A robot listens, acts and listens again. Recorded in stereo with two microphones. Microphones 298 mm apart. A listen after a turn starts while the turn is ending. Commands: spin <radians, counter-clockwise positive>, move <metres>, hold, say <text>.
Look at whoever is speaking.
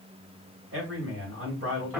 spin -0.79
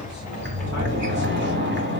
hold
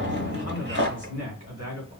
spin -1.40
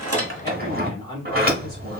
spin 0.26
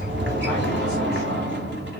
hold
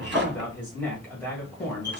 say Facing the man speaking, 1 to 2 m away.